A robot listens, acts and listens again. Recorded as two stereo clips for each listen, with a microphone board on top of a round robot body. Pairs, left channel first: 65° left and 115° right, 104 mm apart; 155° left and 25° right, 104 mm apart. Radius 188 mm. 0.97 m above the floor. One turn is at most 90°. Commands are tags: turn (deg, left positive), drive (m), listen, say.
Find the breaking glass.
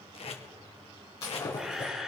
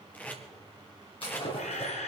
<turn deg="90"/>
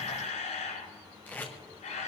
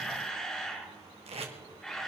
<turn deg="30"/>
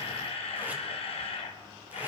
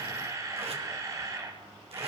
<say>Facing where the breaking glass came from. I can't hear it now.</say>